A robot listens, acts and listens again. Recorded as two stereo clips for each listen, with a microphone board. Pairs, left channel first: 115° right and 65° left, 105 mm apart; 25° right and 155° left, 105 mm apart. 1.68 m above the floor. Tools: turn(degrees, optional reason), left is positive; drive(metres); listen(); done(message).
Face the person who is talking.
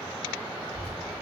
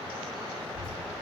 turn(degrees=170, reason="The child speaking: 170° left.")
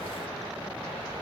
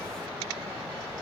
turn(degrees=50, reason="The child speaking is now 50° left.")
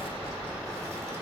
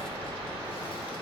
turn(degrees=10, reason="The child speaking is now 10° left.")
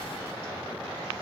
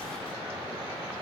listen()
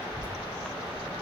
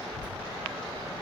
turn(degrees=25, reason="The child speaking is now 25° left.")
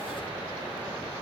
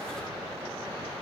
listen()
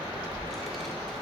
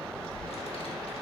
turn(degrees=-25, reason="The child speaking is now 25° right.")
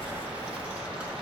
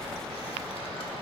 turn(degrees=-10, reason="The child speaking is now 10° right.")
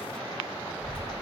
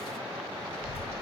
done("Found it: a child speaking, straight ahead, 1 to 2 m away.")